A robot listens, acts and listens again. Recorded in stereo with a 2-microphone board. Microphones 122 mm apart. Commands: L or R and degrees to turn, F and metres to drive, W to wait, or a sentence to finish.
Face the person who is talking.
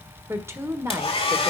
R20
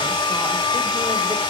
W
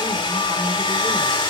W
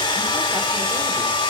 I heard a woman speaking, but can't make it out now. It was about straight ahead or 140° right.